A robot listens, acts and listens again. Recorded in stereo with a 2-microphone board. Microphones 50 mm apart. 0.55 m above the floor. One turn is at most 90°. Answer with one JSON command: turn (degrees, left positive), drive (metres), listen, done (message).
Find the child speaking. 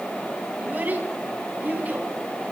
{"turn": -35}
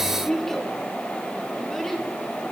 {"done": "Found it: a child speaking, straight ahead."}